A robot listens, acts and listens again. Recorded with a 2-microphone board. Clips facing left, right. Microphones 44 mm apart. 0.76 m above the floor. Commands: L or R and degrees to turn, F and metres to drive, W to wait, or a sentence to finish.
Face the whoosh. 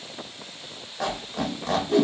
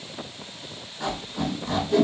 L40
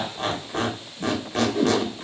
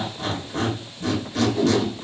L90
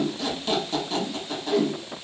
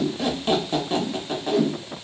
Facing the whoosh, 1 to 2 m away.